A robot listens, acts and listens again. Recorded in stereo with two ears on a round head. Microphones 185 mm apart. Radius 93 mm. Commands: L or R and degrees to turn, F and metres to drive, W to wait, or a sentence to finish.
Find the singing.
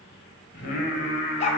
L30
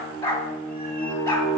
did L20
L30
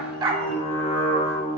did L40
L25
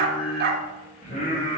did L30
L145
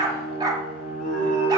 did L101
L40
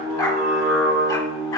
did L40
Facing the singing.